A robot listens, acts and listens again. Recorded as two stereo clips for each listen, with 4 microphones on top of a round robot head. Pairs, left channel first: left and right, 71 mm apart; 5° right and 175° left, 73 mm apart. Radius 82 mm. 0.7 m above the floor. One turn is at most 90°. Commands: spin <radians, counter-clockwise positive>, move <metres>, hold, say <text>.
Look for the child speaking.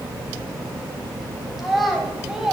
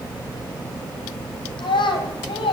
say Facing the child speaking.